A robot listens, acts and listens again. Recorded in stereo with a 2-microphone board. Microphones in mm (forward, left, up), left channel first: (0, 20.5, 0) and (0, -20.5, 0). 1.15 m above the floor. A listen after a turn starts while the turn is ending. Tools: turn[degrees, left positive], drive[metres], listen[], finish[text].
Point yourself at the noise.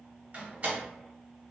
Thought: The door slam: about 35° right or 145° right.
Action: turn[-35]
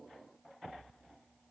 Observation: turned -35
Action: listen[]
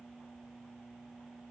Action: finish[I heard a door slam, but can't make it out now. It was about straight ahead or 110° right.]